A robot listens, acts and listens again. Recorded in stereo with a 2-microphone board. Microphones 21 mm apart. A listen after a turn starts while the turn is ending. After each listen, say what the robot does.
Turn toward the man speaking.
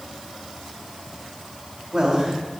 Turn 35° right.
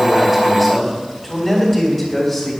Turn 10° left.
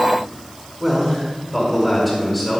Turn 10° left.
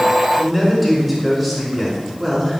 Found it: a man speaking, straight ahead.